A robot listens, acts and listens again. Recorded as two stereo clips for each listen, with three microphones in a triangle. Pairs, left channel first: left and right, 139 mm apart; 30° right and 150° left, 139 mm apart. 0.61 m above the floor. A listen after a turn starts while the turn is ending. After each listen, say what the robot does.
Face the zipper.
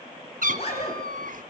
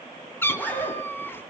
Turn 45° left.
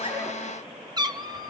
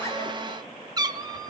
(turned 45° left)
Keep listening.
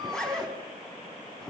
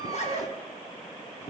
Found it: a zipper, straight ahead, 2 to 4 m away.